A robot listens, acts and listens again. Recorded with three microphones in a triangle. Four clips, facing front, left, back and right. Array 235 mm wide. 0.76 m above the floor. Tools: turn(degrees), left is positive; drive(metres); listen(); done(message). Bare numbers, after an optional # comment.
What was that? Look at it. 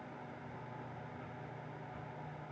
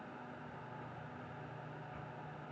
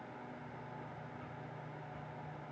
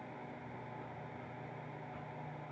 listen()
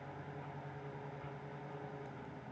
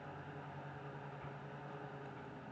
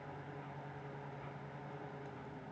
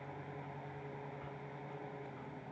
listen()
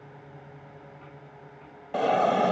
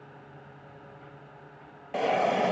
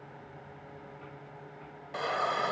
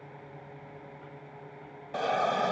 # The hiss: 20° left.
turn(20)
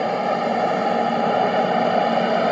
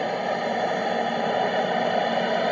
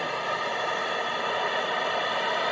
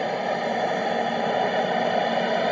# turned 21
done("Facing the hiss.")